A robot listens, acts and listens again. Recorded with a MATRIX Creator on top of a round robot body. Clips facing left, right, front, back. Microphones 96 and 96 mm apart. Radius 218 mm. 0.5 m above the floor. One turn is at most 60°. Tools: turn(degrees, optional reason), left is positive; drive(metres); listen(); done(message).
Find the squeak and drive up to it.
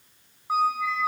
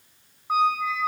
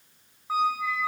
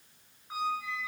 drive(metres=1.0)
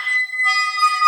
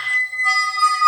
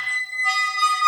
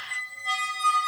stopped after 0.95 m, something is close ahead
done("I am next to the squeak.")